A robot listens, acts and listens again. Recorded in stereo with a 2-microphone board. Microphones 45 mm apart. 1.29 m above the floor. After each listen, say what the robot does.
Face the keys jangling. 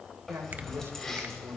Turn 30° left.
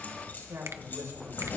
Turn 135° left.
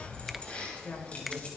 Turn 30° left.
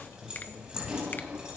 Turn 15° right.
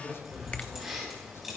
Found it: keys jangling, straight ahead, over 4 m away.